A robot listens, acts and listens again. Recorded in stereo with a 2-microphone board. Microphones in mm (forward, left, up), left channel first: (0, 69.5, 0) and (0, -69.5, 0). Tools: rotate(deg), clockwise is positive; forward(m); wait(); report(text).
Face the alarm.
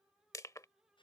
wait()
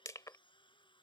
wait()
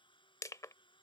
report("I can't make out an alarm to turn to.")